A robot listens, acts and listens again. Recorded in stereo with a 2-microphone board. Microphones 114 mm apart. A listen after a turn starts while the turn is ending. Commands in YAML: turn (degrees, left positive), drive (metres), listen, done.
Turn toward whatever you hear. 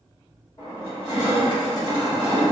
turn: 40
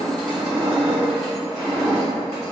done: "Found it: crushing, straight ahead, 1 to 2 m away."